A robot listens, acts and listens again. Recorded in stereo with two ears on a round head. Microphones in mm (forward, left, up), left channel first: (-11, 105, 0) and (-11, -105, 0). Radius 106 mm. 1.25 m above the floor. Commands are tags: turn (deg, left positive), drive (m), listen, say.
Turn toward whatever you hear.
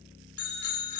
<turn deg="75"/>
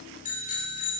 <turn deg="30"/>
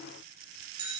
<turn deg="-20"/>
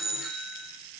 <say>Facing the bicycle bell, 2 to 4 m away.</say>